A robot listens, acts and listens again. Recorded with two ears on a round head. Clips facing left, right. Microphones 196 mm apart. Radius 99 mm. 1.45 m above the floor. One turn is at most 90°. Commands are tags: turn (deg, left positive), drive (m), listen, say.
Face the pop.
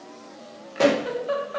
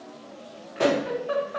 <turn deg="50"/>
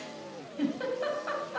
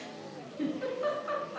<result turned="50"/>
<listen/>
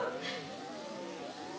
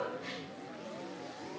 <say>I heard a pop, but can't make it out now. It was about straight ahead or 80° left.</say>